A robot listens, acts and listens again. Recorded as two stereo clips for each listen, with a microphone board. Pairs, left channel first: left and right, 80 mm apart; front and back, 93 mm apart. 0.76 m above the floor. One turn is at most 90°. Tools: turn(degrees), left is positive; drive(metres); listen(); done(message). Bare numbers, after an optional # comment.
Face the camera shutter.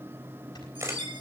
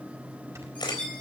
# The camera shutter: 40° right.
turn(-40)
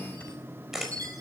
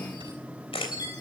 done("Found it: a camera shutter, straight ahead.")